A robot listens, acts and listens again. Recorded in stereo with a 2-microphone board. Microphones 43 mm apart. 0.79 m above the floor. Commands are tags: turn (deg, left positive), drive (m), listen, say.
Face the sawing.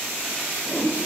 <listen/>
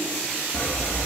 <turn deg="50"/>
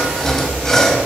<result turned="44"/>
<turn deg="15"/>
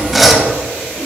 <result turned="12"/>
<say>Found it: sawing, straight ahead, 1 to 2 m away.</say>